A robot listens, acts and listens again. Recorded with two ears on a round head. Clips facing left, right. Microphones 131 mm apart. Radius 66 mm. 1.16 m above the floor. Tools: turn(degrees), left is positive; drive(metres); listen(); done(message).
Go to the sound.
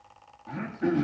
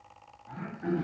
turn(degrees=90)
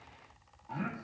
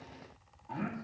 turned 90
drive(metres=1.0)
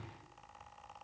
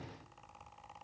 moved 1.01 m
listen()
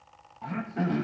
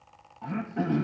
drive(metres=1.0)
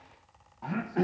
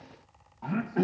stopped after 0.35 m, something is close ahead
done("Arrived at the throat clearing, straight ahead.")